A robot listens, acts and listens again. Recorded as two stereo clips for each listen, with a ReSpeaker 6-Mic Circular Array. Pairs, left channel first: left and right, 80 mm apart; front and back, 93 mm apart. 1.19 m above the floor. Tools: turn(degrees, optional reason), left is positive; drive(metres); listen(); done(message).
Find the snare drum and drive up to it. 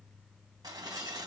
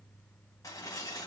listen()
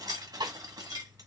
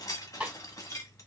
turn(degrees=-100, reason="The snare drum: 100° right.")
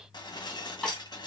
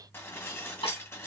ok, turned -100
turn(degrees=15, reason="The snare drum is now 15° left.")
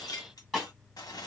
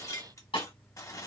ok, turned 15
drive(metres=1.0)
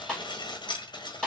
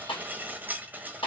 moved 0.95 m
turn(degrees=10, reason="The snare drum is now 10° left.")
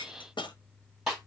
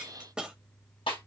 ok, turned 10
drive(metres=1.0)
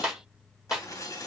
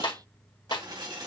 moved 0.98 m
drive(metres=1.0)
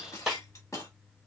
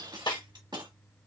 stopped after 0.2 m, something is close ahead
turn(degrees=-10, reason="The snare drum is now 10° right.")
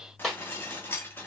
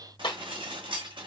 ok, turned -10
done("I am next to the snare drum.")